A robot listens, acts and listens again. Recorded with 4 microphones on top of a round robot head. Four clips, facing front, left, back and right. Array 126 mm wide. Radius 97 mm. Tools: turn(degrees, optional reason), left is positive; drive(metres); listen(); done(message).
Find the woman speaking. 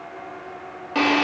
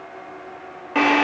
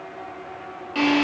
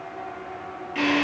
listen()
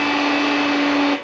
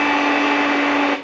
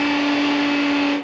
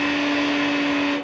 listen()
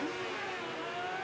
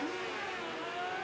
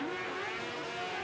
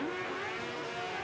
done("I can't make out a woman speaking, only a drill.")